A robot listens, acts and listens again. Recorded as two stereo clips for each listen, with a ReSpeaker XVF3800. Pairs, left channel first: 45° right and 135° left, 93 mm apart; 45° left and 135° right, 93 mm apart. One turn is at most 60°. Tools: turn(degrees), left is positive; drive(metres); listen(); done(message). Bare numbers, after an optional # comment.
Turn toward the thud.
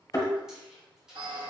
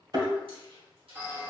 # The thud: 95° right.
turn(-60)
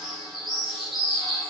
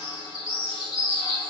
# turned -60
# Nothing new. It was at 35° right.
turn(-35)
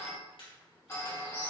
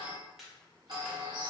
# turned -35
done("I heard a thud from this way, but can't make it out now.")